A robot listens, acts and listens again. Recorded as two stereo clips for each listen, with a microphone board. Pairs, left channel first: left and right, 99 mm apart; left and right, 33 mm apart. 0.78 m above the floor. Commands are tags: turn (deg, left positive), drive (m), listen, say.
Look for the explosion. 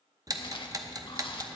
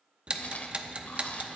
<listen/>
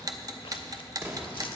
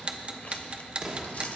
<turn deg="-25"/>
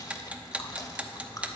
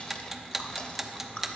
<listen/>
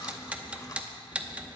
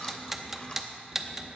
<say>I heard an explosion, but can't make it out now. It was about straight ahead or 130° right.</say>